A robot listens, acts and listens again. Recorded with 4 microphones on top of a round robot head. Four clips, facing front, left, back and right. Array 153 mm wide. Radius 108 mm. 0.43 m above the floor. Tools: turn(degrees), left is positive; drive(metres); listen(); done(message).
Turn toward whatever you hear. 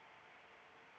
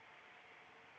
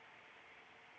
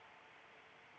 listen()
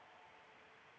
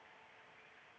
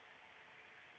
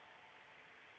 listen()
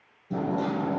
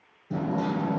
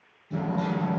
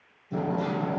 turn(degrees=60)
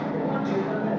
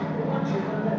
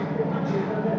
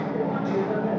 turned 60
done("Facing the hammering, over 4 m away.")